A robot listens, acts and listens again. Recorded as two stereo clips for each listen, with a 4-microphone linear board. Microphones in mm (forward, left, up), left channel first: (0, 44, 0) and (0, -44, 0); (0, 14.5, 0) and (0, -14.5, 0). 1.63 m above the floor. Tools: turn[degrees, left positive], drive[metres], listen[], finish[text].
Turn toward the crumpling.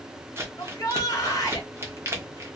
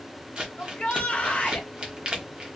Thought: The crumpling: about 30° right or 150° right.
Action: turn[-30]
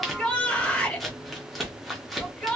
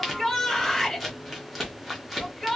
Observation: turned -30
Action: finish[Facing the crumpling.]